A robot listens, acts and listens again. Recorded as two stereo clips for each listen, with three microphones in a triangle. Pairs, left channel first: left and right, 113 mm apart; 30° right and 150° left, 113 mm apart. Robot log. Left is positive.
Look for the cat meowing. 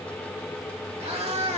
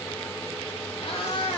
note: The cat meowing: 70° right.
cmd yaw -70
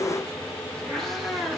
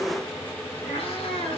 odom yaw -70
end: Found it: a cat meowing, straight ahead.